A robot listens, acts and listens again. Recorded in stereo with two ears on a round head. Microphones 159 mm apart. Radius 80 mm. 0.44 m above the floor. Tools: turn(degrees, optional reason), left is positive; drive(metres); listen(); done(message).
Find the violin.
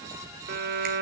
turn(degrees=-60, reason="The violin: about 60° right or 120° right.")
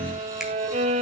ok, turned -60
turn(degrees=-45, reason="So it is at 45° right.")
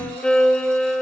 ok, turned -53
done("Found it: a violin, straight ahead.")